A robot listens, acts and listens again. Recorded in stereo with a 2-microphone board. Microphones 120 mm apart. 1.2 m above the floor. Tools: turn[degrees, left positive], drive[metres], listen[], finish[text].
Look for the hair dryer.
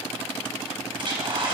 Thought: The hair dryer: about 45° right or 135° right.
Action: turn[-45]
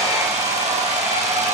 Thought: So it is at 90° right.
Action: turn[-90]
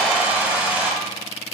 Thought: The hair dryer is now 15° right.
Action: turn[-15]
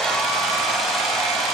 Action: finish[Found it: a hair dryer, straight ahead.]